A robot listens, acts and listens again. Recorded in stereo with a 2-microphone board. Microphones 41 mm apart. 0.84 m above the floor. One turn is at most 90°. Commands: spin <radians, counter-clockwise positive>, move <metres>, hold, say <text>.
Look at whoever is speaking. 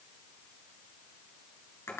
hold
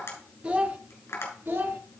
spin -1.05
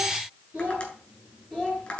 spin -0.44
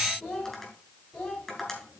say Facing the child speaking.